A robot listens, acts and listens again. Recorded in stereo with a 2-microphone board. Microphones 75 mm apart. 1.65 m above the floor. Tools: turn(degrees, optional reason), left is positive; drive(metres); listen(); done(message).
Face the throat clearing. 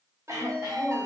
turn(degrees=-50, reason="The throat clearing: about 50° right or 130° right.")
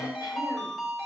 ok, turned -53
listen()
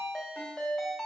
listen()
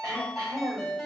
turn(degrees=-75, reason="So it is at 75° right.")
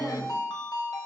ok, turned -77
done("Facing the throat clearing, 1 to 2 m away.")